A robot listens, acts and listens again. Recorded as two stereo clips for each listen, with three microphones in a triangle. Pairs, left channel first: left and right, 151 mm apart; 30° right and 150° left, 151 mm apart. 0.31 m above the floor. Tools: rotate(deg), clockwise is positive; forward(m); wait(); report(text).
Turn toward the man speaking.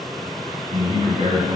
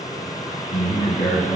rotate(50)
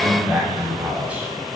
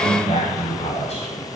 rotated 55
rotate(15)
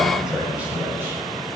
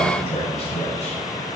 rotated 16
rotate(20)
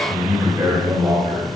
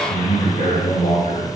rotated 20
rotate(40)
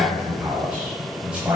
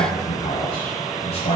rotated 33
rotate(10)
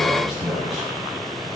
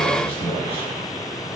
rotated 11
report("Facing the man speaking, 1 to 2 m away.")